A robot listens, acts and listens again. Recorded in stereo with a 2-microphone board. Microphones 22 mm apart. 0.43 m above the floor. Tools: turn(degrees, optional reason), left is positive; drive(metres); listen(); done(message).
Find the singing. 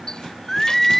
turn(degrees=30)
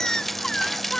turn(degrees=140, reason="So it is at 140° left.")
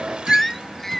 turn(degrees=10, reason="The singing is now 10° left.")
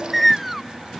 done("Found it: singing, straight ahead.")